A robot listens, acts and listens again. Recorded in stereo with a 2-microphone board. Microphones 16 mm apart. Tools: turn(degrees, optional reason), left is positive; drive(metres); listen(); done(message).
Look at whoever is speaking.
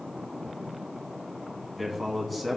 turn(degrees=30)
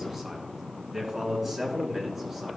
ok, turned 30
turn(degrees=-15, reason="So it is at 15° right.")
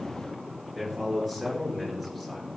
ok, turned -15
turn(degrees=10, reason="The man speaking is now 10° left.")
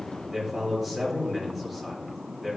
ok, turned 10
done("Found it: a man speaking, straight ahead.")